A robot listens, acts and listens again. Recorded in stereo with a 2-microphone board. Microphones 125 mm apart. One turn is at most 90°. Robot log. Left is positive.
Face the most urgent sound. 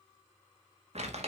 cmd idle
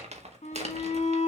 note: The shout: about 60° left or 120° left.
cmd yaw +60
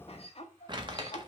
note: So it is at 55° left.
cmd yaw +55
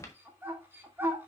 note: The shout is now 20° right.
cmd yaw -20
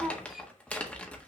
end: Found it: a shout, straight ahead.